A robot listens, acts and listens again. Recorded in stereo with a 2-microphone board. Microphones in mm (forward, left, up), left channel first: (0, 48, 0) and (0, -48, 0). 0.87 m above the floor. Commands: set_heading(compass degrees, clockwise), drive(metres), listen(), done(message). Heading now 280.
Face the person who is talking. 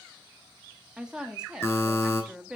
set_heading(310)
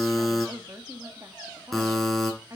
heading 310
set_heading(95)
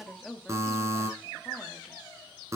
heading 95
done("Facing the woman speaking.")